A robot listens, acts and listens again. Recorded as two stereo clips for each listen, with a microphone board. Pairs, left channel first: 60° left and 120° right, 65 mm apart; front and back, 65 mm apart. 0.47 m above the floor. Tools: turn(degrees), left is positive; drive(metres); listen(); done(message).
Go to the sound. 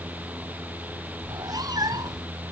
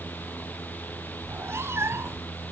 turn(degrees=-130)
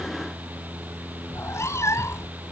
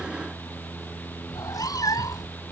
turn(degrees=20)
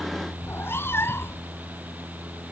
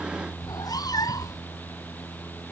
turn(degrees=10)
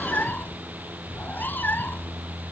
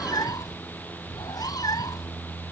drive(metres=1.0)
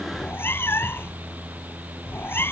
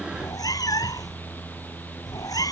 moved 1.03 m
turn(degrees=10)
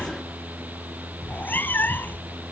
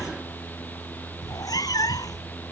drive(metres=1.0)
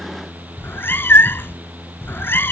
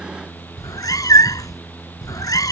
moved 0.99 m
turn(degrees=10)
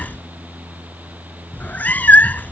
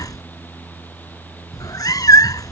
drive(metres=1.0)
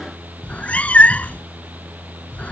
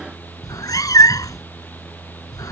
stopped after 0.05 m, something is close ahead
done("I am next to the cat meowing.")